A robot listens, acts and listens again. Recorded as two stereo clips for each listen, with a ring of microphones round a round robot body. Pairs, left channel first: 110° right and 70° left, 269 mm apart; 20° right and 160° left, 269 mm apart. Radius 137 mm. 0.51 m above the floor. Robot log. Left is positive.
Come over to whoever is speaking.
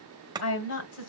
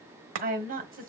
note: The woman speaking: 145° right.
cmd yaw -145
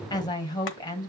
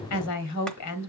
note: The woman speaking is now 35° right.
cmd yaw -35
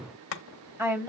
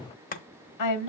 note: The woman speaking is now 10° right.
cmd yaw -10
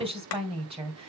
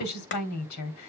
cmd fwd 1.0
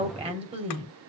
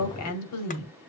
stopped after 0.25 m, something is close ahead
end: Blocked. The woman speaking is further on, straight ahead.